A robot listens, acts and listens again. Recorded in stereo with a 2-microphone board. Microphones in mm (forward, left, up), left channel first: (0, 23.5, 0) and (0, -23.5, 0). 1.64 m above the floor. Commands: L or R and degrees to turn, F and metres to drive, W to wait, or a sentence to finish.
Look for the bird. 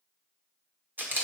W
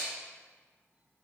W
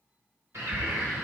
R75
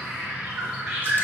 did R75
R25
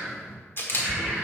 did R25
R15
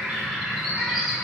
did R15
Found it: a bird, straight ahead.